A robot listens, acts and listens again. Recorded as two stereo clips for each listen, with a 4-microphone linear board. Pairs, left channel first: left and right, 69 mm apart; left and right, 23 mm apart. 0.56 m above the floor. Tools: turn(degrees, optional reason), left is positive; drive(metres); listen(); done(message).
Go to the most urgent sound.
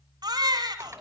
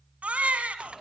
turn(degrees=-90)
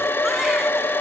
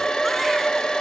listen()
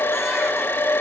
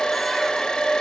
listen()
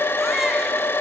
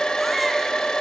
done("I heard a baby crying from this way, but can't make it out now. I did not reach it.")